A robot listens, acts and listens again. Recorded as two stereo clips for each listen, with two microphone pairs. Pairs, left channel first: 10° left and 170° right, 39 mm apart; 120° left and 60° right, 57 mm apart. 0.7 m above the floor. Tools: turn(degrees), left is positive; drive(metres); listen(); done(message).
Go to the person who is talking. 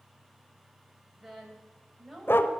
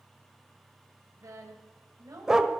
turn(degrees=-80)
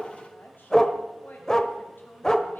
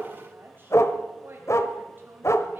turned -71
turn(degrees=-10)
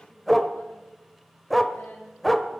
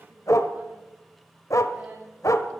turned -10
listen()
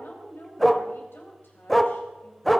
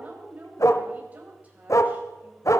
drive(metres=1.0)
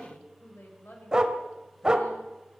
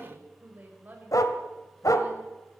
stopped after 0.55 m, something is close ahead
done("Something is in my way. I am facing the woman speaking but have not reached it.")